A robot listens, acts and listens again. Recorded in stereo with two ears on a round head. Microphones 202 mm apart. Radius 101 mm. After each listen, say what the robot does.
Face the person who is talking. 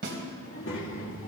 Turn 60° left.
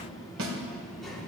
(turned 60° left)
Found it: a child speaking, straight ahead, 2 to 4 m away.